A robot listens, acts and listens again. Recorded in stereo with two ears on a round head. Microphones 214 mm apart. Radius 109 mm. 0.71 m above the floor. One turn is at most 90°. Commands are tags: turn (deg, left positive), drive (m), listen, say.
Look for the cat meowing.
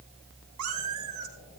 <turn deg="-90"/>
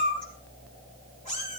<turn deg="30"/>
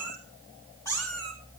<turn deg="15"/>
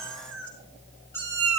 <turn deg="10"/>
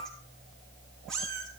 <say>Facing the cat meowing, over 4 m away.</say>